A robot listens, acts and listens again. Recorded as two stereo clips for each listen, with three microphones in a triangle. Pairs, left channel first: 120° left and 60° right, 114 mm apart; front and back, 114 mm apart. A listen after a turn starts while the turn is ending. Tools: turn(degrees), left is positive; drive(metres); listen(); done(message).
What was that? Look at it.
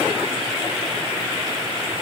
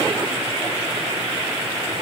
listen()
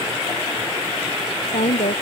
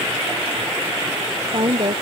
turn(degrees=135)
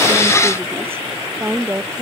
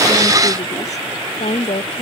turn(degrees=10)
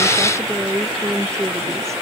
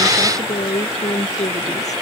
done("Facing the woman speaking.")